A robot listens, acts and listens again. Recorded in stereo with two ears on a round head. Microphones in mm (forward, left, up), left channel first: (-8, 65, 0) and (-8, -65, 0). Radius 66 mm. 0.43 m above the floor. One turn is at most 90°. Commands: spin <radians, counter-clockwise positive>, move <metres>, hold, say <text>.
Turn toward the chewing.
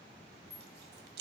spin -1.57
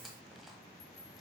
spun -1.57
hold
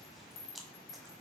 say Found it: chewing, straight ahead.